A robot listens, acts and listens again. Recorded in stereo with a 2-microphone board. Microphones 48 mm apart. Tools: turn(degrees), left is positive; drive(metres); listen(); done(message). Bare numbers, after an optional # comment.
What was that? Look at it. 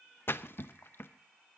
# The splash: about 55° left or 125° left.
turn(55)
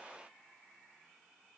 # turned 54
listen()
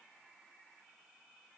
done("I heard a splash, but can't make it out now. It was about straight ahead or 75° left.")